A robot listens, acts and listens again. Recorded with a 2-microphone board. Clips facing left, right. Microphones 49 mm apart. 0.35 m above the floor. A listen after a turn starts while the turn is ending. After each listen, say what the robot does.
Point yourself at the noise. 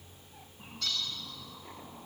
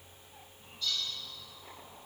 Turn 65° left.
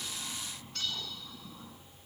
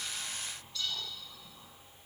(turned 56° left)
Turn 55° left.
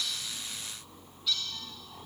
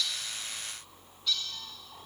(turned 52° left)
Found it: a bird, straight ahead, 2 to 4 m away.